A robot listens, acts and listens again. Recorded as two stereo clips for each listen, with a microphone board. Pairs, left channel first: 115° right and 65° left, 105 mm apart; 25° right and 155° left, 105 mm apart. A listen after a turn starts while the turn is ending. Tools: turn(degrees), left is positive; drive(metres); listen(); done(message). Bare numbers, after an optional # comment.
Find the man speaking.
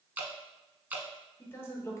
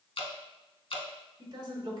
# The man speaking: 165° right.
turn(-165)
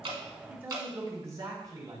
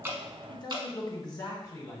# The man speaking is now 25° left.
turn(25)
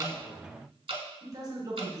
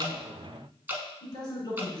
# The man speaking is now 15° left.
turn(15)
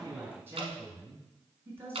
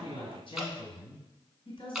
done("Found it: a man speaking, straight ahead.")